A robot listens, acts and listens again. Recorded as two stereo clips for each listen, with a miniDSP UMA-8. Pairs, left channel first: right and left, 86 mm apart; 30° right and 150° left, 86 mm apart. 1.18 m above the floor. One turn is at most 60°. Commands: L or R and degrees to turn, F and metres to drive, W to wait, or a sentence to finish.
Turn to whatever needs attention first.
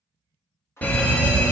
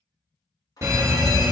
R60
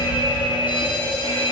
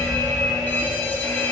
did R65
R60
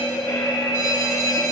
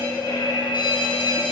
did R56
R40
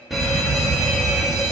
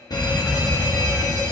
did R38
Found it: an alarm, straight ahead, 1 to 2 m away.